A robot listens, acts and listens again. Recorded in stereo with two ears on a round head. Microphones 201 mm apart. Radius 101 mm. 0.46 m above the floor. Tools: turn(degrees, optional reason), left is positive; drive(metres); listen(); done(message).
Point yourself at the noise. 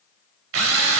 turn(degrees=-65, reason="The drill: about 65° right or 115° right.")
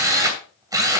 turn(degrees=-20, reason="So it is at 20° right.")
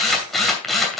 done("Facing the drill, 2 to 4 m away.")